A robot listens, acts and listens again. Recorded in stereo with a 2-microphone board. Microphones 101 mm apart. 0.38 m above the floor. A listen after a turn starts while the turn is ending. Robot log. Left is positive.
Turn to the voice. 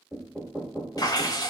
cmd idle
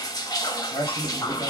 note: The man speaking: about 55° left or 125° left.
cmd yaw +55
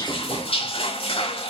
cmd idle
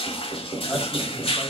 cmd idle
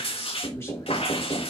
note: So it is at 30° left.
cmd yaw +30
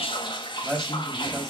end: Found it: a man speaking, straight ahead.